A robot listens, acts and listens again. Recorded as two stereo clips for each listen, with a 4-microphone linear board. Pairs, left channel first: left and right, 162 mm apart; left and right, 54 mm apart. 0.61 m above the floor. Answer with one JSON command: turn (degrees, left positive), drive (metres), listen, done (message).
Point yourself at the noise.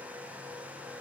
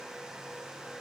{"listen": true}
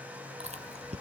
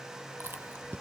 {"turn": -45}
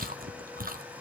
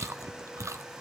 {"turn": -85}
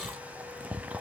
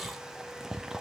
{"turn": -10}
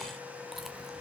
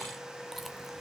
{"listen": true}
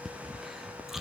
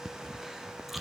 {"done": "Found it: chewing, straight ahead, under 1 m away."}